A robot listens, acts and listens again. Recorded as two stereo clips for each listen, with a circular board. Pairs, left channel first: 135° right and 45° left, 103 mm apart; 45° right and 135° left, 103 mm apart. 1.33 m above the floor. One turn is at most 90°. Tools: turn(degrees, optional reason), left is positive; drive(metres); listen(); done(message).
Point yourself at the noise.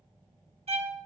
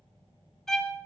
turn(degrees=40, reason="The violin: 40° left.")
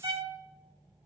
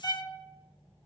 done("Facing the violin.")